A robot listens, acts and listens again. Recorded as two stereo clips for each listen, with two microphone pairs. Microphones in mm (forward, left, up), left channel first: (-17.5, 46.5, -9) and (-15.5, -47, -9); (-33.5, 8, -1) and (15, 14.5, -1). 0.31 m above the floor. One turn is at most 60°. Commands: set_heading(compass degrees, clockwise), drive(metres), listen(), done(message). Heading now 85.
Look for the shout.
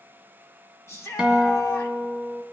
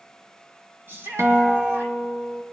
set_heading(45)
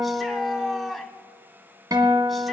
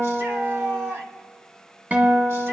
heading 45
done("Found it: a shout, straight ahead, 1 to 2 m away.")